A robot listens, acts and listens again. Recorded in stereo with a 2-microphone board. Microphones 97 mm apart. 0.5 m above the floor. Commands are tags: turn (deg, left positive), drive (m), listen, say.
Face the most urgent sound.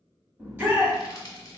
<turn deg="-20"/>
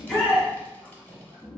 <say>Facing the shout.</say>